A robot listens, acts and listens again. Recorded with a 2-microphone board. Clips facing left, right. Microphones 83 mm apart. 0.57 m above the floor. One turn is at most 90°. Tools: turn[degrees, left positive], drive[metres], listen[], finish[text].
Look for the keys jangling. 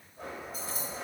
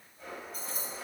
Thought: The keys jangling: about 50° right or 130° right.
Action: turn[-50]
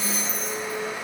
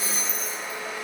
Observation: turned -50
Action: finish[Facing the keys jangling, 2 to 4 m away.]